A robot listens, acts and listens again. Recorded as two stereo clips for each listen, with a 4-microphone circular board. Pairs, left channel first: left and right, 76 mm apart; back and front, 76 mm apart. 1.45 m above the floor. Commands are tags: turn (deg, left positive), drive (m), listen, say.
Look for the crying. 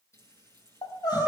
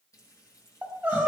<turn deg="70"/>
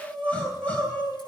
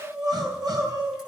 <turn deg="15"/>
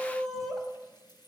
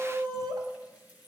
<say>Found it: crying, straight ahead, 2 to 4 m away.</say>